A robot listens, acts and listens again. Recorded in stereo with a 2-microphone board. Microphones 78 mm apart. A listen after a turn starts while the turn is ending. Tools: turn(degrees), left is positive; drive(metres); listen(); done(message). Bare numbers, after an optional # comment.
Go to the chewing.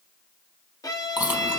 # The chewing: about 25° right or 155° right.
turn(-25)
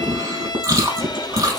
# So it is at 130° right.
turn(-130)
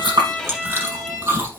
# The chewing is now 30° right.
turn(-30)
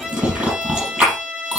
# The chewing is now 15° right.
turn(-15)
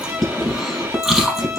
drive(1.0)
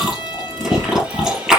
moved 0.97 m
drive(1.0)
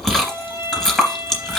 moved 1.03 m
drive(1.0)
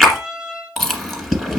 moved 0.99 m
drive(1.0)
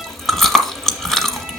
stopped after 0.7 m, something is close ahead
done("Arrived at the chewing, straight ahead.")